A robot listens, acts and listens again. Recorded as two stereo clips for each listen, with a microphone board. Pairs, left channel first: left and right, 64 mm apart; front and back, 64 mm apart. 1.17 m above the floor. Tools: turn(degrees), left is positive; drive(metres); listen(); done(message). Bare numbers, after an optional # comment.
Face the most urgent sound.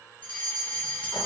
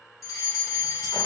# The fire alarm: 20° left.
turn(20)
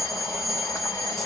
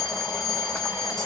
done("Facing the fire alarm.")